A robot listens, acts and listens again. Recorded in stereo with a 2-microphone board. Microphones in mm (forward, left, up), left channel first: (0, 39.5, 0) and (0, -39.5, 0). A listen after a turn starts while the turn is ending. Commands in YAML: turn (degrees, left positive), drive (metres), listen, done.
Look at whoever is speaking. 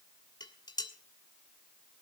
listen: true
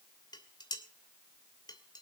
listen: true
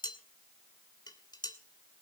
done: "I can't make out anyone speaking to turn to."